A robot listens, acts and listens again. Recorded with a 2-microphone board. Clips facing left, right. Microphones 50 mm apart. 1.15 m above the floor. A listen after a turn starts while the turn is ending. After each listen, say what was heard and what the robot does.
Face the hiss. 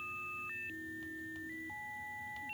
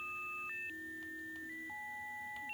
Keep listening.
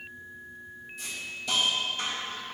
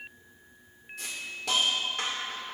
The hiss: about 75° right or 105° right. Turn 75° right.
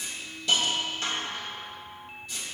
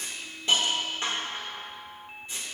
So it is at 25° right. Turn 25° right.
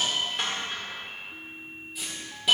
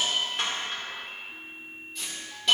Facing the hiss, 1 to 2 m away.